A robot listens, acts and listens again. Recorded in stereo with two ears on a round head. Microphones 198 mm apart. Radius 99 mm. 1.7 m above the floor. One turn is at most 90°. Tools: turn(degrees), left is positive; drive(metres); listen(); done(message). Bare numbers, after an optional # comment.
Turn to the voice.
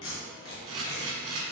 listen()
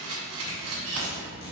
# The child speaking: about 60° left or 120° left.
turn(60)
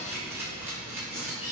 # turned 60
listen()
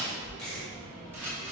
done("Facing the child speaking, 2 to 4 m away.")